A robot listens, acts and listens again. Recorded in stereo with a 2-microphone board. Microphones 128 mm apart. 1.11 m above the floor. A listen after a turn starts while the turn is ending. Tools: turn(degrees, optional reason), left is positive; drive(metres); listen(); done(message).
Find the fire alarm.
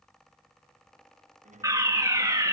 turn(degrees=-25, reason="The fire alarm: about 25° right or 155° right.")
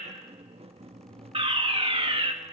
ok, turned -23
turn(degrees=-130, reason="So it is at 130° right.")
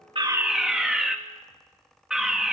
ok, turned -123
done("Facing the fire alarm.")